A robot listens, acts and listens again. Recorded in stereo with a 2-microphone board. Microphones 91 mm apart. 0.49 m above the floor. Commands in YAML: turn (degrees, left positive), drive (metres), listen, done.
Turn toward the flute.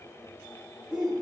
listen: true
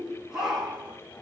listen: true
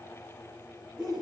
done: "I can't make out a flute, only a shout."